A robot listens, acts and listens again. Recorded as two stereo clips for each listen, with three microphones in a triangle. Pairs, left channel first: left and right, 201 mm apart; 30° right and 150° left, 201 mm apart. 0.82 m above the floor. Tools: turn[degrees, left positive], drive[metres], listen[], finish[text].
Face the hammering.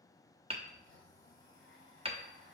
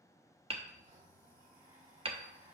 Thought: The hammering: 150° right.
Action: turn[-150]
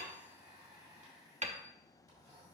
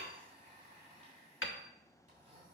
Thought: The hammering is now 35° right.
Action: turn[-35]
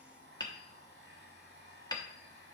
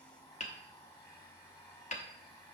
Thought: The hammering is now 20° left.
Action: turn[20]
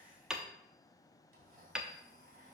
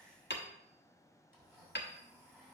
Action: finish[Facing the hammering.]